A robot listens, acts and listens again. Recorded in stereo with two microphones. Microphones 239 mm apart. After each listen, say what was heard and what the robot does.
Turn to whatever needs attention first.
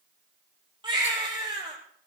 The baby crying: about 20° right or 160° right. Turn 20° right.
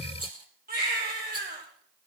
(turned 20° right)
So it is at 140° right. Turn 140° right.
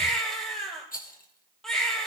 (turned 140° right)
Found it: a baby crying, straight ahead.